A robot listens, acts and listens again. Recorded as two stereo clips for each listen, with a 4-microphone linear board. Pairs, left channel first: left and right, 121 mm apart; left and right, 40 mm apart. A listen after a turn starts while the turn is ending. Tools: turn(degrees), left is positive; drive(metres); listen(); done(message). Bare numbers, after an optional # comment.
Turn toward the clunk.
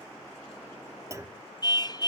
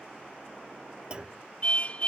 # The clunk: about 25° right or 155° right.
turn(-25)
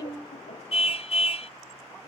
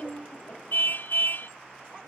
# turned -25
listen()
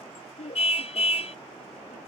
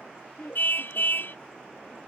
done("I heard a clunk, but can't make it out now. It was about straight ahead or 130° right.")